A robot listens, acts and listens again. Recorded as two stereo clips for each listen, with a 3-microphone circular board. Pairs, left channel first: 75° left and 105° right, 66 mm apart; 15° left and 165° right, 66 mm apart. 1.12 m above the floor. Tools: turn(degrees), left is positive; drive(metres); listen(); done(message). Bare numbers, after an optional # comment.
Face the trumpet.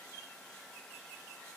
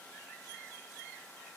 listen()
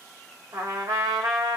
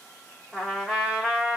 # The trumpet: 85° right.
turn(-85)
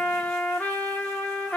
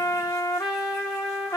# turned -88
done("Found it: a trumpet, straight ahead, under 1 m away.")